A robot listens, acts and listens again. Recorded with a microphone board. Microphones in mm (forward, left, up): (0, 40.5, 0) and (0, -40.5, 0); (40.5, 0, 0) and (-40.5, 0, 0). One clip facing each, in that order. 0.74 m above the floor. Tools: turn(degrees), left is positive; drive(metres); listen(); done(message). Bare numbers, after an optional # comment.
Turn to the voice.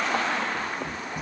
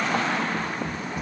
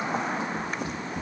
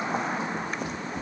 listen()
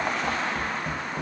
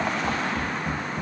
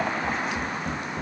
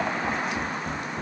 listen()
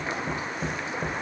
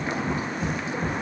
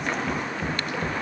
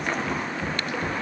done("I can't make out anyone speaking, only tapping.")